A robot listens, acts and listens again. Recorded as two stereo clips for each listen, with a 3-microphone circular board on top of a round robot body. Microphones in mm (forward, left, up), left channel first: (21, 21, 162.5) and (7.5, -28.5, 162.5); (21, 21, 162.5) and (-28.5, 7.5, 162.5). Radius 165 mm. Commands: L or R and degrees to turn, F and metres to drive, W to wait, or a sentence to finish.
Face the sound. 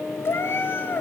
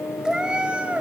L130
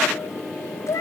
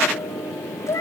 L50
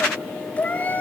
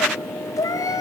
L15
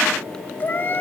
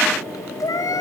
L20
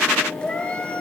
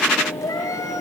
Facing the cat meowing, 2 to 4 m away.